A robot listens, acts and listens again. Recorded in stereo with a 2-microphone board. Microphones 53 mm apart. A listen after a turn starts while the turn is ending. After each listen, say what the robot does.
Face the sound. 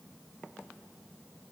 Keep listening.
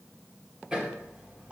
Turn 20° right.
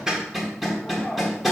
Found it: hammering, straight ahead.